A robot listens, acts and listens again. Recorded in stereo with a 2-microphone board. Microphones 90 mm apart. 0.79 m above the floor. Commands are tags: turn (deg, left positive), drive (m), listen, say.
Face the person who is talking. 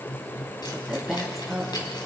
<turn deg="30"/>
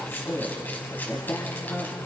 <turn deg="150"/>
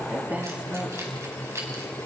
<turn deg="-20"/>
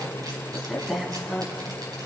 <say>Facing the woman speaking.</say>